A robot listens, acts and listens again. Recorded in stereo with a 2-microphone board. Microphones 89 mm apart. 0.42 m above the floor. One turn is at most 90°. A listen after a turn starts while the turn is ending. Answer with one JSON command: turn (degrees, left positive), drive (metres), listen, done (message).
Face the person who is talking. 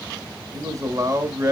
{"turn": -40}
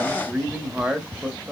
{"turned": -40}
{"turn": -10}
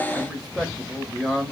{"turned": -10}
{"done": "Found it: a man speaking, straight ahead."}